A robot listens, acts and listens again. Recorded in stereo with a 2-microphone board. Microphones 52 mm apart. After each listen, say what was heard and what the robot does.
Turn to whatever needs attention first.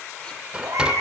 Turn 90° right.
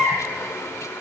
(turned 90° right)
So it is at 10° right. Turn 10° right.
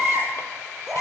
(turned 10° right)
Found it: a baby crying, straight ahead.